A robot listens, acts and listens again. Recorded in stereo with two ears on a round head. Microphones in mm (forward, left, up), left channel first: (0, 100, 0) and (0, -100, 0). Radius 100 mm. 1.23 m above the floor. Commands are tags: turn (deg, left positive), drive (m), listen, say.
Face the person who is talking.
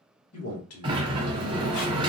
<turn deg="90"/>
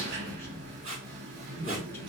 <turn deg="10"/>
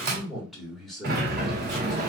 <say>Found it: a man speaking, straight ahead, 1 to 2 m away.</say>